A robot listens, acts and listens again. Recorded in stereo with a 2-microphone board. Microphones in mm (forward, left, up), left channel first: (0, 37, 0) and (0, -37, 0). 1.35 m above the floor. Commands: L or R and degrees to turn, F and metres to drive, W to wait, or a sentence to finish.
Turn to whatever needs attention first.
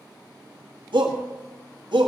R90
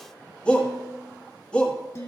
L10
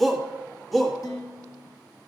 Facing the shout, 1 to 2 m away.